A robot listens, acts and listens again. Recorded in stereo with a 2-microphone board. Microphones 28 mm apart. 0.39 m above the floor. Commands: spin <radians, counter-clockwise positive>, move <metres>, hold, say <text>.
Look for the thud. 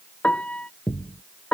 spin 0.79
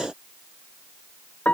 hold
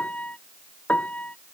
say I heard a thud, but can't make it out now. It was about straight ahead or 90° left.